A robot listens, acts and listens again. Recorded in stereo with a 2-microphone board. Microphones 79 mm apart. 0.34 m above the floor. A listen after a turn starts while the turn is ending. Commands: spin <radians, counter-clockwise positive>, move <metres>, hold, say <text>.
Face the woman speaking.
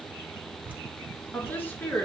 spin 0.44
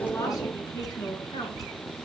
spin 2.18
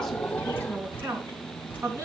spin -0.70
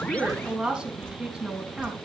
spin -0.17
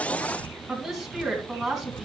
say Found it: a woman speaking, straight ahead, 2 to 4 m away.